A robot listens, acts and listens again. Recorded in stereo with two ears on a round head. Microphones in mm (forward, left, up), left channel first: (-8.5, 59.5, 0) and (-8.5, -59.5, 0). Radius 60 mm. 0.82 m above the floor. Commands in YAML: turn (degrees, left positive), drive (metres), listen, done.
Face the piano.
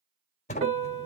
turn: -55
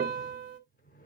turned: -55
turn: -65
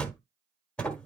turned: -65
listen: true
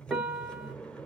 done: "Facing the piano, 1 to 2 m away."